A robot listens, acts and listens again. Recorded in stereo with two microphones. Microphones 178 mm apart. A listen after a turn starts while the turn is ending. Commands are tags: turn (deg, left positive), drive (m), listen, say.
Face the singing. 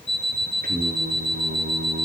<turn deg="-70"/>
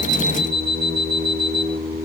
<turn deg="-30"/>
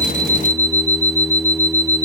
<turn deg="30"/>
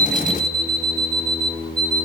<turn deg="10"/>
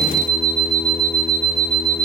<say>Facing the singing, over 4 m away.</say>